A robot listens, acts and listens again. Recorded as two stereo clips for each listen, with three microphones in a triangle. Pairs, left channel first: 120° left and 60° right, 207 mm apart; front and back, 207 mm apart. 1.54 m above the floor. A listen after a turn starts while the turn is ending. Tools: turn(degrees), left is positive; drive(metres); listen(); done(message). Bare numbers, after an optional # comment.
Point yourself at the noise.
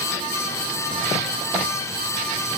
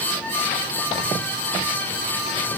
listen()
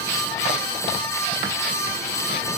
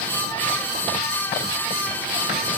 listen()
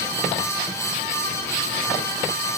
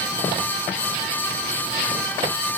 done("I can't make out anything to turn to.")